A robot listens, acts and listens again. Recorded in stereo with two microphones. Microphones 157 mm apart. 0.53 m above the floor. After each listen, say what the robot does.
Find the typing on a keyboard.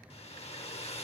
Keep listening.
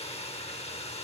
Keep listening.
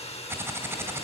Turn 15° right.
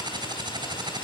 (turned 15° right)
Turn 150° right.
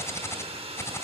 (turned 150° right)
Turn 20° left.
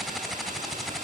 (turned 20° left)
Facing the typing on a keyboard, 2 to 4 m away.